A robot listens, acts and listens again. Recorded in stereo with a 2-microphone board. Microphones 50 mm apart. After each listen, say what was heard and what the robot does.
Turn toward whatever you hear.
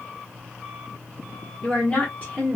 The woman speaking: about 35° left or 145° left. Turn 35° left.
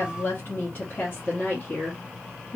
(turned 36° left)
The woman speaking: about 35° left or 145° left. Turn 35° left.
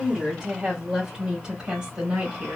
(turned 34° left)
So it is at 15° right. Turn 15° right.
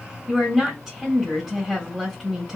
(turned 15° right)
Found it: a woman speaking, straight ahead, 1 to 2 m away.